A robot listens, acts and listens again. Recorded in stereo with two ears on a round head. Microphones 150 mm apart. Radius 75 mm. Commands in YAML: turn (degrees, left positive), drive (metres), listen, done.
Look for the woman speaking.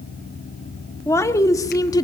turn: 25
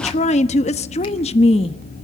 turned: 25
turn: 35
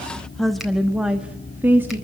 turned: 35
turn: -15
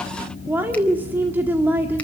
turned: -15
turn: -10
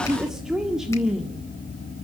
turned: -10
done: "Found it: a woman speaking, straight ahead."